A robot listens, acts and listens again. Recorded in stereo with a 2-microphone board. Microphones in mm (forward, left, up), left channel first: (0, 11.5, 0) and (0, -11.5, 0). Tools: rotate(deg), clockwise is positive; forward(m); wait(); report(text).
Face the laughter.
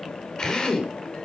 wait()
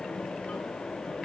wait()
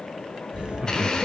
rotate(45)
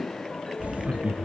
rotate(90)
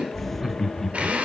report("Found it: laughter, straight ahead, 1 to 2 m away.")